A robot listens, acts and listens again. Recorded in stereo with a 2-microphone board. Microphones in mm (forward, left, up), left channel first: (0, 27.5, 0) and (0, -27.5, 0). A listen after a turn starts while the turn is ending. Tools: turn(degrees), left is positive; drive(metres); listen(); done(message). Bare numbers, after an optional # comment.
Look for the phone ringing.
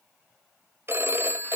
# The phone ringing: about 50° right or 130° right.
turn(-50)
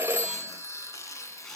listen()
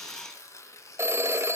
# So it is at 70° right.
turn(-70)
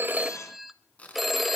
done("Found it: a phone ringing, straight ahead, under 1 m away.")